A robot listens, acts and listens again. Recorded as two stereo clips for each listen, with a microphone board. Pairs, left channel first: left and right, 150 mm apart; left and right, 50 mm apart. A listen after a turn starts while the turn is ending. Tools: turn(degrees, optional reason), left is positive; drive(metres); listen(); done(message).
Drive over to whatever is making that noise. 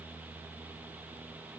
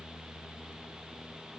listen()
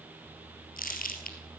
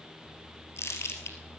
turn(degrees=70, reason="The crumpling: about 70° left or 110° left.")
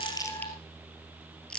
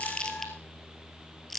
drive(metres=1.0)
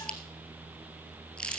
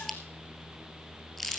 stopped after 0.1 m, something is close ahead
done("Something is in my way. I am facing the crumpling but have not reached it.")